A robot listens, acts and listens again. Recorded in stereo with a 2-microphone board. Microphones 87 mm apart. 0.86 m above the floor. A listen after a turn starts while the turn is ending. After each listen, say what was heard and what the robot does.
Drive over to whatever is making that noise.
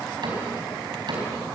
The cupboard door: about 55° right or 125° right. Turn 55° right.
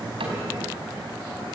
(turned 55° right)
Keep listening.
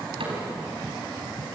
So it is at 75° right. Turn 75° right.
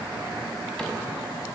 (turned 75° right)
Keep listening.
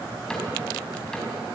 The cupboard door is now 10° left. Turn 10° left.
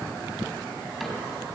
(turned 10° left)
Drive 1.0 m forward.
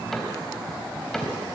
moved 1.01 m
Drive 1.0 m forward.
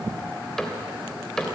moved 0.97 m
Drive 1.0 m forward.
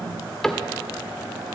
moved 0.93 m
Drive 1.0 m forward.
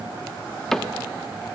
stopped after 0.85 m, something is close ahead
I am next to the cupboard door.